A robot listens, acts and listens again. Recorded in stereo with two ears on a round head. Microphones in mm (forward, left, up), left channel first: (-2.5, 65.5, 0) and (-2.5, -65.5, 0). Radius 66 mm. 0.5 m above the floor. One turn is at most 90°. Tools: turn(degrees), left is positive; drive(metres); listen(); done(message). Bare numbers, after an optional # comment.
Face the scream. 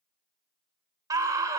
# The scream: about 25° right or 155° right.
turn(-25)
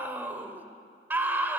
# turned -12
# So it is at 15° right.
turn(-15)
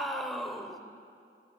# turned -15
done("Facing the scream.")